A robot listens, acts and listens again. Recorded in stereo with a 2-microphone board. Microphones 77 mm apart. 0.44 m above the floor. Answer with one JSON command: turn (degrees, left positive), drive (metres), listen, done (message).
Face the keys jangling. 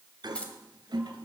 {"turn": 15}
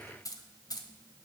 {"turn": 125}
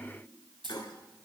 {"turn": -75}
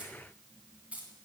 {"turn": -15}
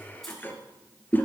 {"listen": true}
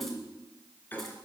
{"listen": true}
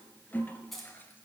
{"done": "Found it: keys jangling, straight ahead."}